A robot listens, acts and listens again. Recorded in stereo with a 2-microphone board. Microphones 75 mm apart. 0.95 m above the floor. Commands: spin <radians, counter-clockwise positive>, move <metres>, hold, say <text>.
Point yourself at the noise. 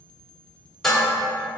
spin 0.52
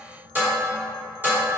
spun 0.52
spin -0.44
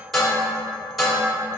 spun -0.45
say Found it: dishes clattering, straight ahead.